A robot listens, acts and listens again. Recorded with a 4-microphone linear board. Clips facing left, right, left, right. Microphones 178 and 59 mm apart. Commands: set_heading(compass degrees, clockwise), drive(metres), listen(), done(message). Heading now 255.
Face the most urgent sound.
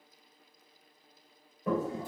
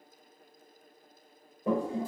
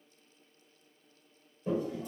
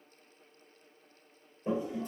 listen()
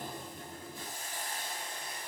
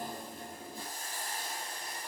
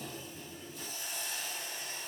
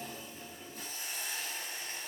listen()
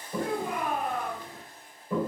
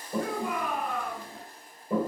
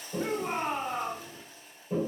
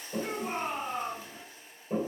set_heading(200)
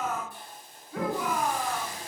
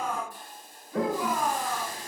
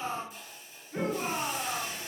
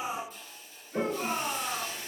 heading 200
set_heading(190)
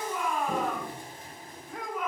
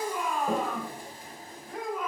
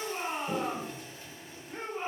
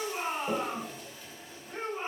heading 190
done("Facing the shout.")